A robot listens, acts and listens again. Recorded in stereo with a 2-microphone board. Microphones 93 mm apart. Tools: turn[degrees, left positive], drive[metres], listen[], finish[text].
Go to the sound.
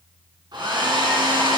Thought: The hair dryer: about 50° right or 130° right.
Action: turn[-50]
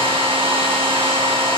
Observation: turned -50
Thought: So it is at 75° right.
Action: turn[-75]
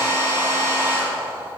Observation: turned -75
Thought: The hair dryer is now 25° right.
Action: turn[-25]
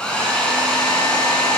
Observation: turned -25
Thought: The hair dryer is now 10° left.
Action: turn[10]
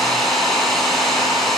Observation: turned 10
Action: drive[1.0]
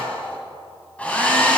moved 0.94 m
Thought: The hair dryer is now 15° left.
Action: turn[15]
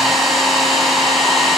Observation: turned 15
Action: drive[1.0]
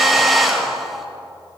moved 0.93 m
Action: drive[1.0]
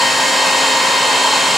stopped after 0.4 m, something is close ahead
Action: finish[Arrived at the hair dryer, straight ahead.]